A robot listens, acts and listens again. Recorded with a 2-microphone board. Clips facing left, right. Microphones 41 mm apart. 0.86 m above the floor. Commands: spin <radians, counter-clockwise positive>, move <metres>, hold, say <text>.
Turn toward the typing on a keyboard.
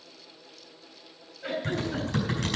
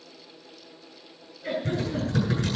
spin 1.57
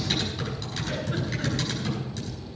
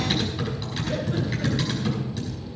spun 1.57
spin -0.17
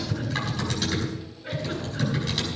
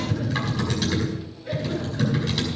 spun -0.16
say Facing the typing on a keyboard, over 4 m away.